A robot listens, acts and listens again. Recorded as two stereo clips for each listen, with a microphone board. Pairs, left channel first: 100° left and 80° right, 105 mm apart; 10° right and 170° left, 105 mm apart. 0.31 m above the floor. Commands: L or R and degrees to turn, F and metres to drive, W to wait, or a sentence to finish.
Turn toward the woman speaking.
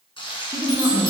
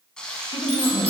R20
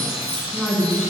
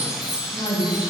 L15
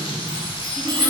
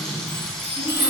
L15
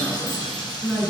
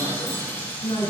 Found it: a woman speaking, straight ahead, 2 to 4 m away.